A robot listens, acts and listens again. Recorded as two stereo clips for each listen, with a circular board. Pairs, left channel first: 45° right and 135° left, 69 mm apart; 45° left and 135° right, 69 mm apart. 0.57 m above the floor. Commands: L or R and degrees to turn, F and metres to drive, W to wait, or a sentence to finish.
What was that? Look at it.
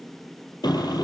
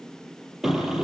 R50
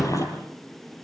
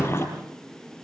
R10
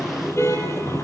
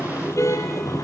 Found it: a car horn, straight ahead, over 4 m away.